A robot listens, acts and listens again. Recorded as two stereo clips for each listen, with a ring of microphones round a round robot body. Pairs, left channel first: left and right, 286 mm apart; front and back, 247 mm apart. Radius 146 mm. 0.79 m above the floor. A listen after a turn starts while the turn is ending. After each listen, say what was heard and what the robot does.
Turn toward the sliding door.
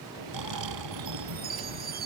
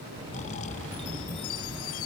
The sliding door: 105° right. Turn 105° right.
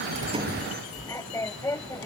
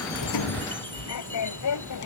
The sliding door is now 10° left. Turn 10° left.
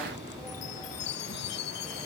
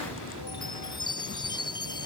Keep listening.
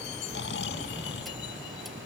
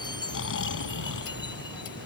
Facing the sliding door.